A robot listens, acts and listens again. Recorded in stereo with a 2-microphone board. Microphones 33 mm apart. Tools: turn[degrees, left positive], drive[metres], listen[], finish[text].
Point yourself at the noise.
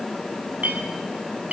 Thought: The clink: about 50° right or 130° right.
Action: turn[-50]
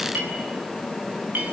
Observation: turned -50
Thought: So it is at 80° right.
Action: turn[-80]
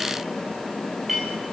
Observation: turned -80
Action: finish[Facing the clink, over 4 m away.]